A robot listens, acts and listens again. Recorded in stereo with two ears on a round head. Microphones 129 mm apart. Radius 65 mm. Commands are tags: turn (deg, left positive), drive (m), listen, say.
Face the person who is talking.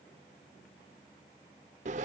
<listen/>
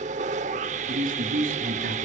<turn deg="-60"/>
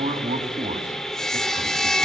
<turn deg="-50"/>
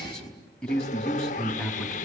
<say>Found it: a man speaking, straight ahead, over 4 m away.</say>